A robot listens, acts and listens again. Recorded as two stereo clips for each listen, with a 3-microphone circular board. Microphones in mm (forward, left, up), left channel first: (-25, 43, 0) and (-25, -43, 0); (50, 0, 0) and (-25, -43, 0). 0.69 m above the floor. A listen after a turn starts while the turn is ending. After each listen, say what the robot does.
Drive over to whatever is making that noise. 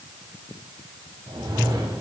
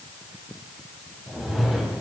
Turn 65° right.
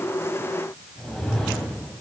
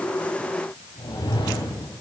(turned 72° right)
Drive 1.0 m forward.
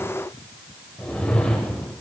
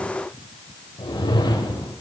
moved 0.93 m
Turn 15° left.
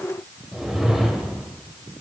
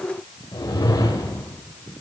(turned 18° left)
Drive 1.0 m forward.
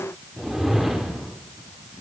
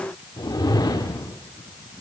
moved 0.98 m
Drive 1.0 m forward.
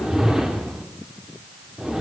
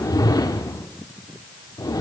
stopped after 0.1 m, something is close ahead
Arrived at the whoosh, straight ahead.